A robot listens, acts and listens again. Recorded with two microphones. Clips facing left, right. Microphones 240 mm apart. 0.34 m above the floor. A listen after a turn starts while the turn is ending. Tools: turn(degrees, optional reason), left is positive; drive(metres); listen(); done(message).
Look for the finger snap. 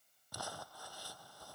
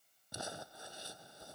listen()
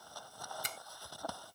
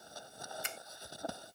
turn(degrees=40, reason="The finger snap: about 40° left or 140° left.")
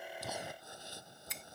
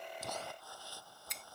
done("Found it: a finger snap, straight ahead.")